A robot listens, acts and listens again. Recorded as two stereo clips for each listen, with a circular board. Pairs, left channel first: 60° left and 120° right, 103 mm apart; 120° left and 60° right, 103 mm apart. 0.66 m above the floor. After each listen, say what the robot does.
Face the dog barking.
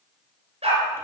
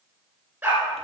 Turn 135° right.
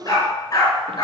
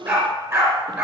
Facing the dog barking.